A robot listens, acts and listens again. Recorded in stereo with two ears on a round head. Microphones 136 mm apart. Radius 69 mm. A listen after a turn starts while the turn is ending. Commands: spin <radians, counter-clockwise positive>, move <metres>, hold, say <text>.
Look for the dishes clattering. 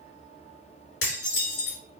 spin 1.57
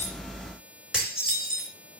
say Found it: dishes clattering, straight ahead, over 4 m away.